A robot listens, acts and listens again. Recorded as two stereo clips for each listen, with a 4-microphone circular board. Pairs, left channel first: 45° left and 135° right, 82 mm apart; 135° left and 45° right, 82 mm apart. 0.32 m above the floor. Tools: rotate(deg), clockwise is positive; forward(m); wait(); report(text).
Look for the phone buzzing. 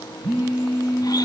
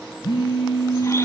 rotate(-155)
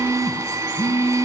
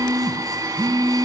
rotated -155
rotate(10)
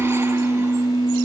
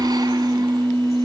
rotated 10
report("Facing the phone buzzing, 2 to 4 m away.")